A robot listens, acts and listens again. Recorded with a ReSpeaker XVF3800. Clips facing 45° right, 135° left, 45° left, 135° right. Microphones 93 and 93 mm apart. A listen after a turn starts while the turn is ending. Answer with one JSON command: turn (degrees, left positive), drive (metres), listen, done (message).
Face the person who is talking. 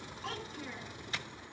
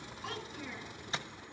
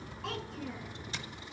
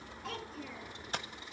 {"turn": 50}
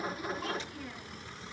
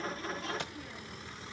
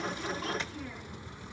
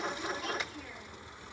{"listen": true}
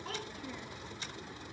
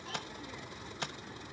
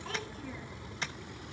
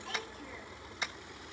{"listen": true}
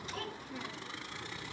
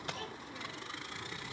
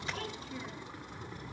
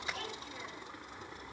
{"done": "Facing the child speaking."}